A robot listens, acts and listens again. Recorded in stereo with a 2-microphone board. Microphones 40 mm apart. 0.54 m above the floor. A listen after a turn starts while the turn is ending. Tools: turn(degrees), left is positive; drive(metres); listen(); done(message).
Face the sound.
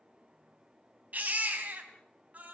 turn(degrees=-45)
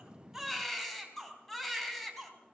done("Facing the baby crying, 2 to 4 m away.")